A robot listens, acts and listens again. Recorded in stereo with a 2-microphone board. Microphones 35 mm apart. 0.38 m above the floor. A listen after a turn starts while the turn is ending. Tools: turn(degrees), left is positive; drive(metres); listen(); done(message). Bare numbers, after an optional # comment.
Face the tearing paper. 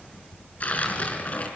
# The tearing paper: about 45° left or 135° left.
turn(45)
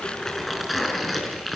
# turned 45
done("Found it: tearing paper, straight ahead, over 4 m away.")